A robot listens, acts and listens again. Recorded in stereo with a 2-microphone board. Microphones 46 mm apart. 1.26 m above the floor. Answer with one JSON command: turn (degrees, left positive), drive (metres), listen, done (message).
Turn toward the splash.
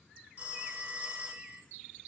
{"listen": true}
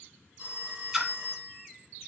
{"turn": -30}
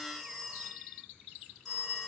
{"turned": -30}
{"listen": true}
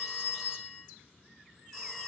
{"done": "I heard a splash, but can't make it out now. It was about 25° left or 145° right."}